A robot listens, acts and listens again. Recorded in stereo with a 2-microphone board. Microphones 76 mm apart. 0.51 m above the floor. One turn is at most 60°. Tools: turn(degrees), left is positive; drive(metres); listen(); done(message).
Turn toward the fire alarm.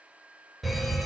turn(degrees=30)
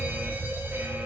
turn(degrees=-30)
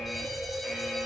done("Found it: a fire alarm, straight ahead.")